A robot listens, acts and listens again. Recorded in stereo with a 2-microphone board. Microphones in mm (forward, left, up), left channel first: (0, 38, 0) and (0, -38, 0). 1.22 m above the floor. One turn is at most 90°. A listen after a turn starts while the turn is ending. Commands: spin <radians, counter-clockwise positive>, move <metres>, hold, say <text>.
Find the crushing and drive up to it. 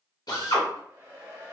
hold
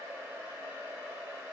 hold
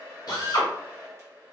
say I can't make out crushing, only a hair dryer and a drill.